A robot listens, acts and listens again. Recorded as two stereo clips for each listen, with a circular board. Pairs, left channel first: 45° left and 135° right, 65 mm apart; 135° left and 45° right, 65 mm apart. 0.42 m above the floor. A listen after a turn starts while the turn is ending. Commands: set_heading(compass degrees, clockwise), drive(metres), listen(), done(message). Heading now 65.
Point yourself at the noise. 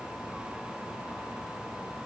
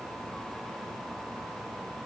listen()
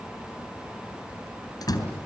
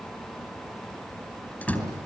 set_heading(355)
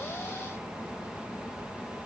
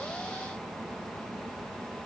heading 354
done("I heard a door slam from this way, but can't make it out now.")